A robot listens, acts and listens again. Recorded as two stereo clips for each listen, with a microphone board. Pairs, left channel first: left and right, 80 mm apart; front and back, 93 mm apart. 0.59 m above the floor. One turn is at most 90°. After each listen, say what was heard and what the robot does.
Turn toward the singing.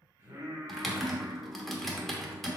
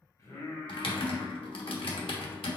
The singing: 45° right. Turn 45° right.
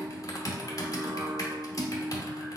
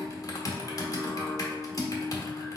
The singing is now 100° right. Turn 90° right.
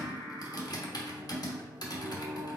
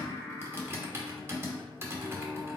The singing is now 50° right. Turn 50° right.
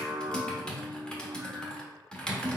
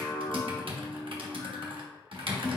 Facing the singing.